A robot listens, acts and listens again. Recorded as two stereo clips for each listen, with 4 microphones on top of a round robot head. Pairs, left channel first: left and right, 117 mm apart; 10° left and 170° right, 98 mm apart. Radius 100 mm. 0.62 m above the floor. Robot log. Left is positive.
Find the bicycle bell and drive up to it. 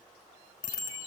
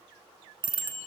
note: The bicycle bell: 150° left.
cmd yaw +150
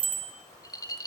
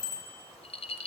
note: The bicycle bell is now 45° right.
cmd yaw -45
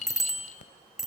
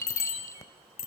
cmd fwd 1.0
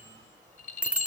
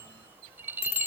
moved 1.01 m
note: The bicycle bell is now 10° right.
cmd yaw -10
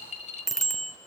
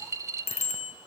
cmd fwd 1.0
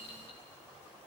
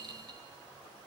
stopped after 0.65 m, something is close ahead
cmd idle
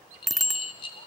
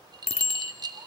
end: Arrived at the bicycle bell, straight ahead.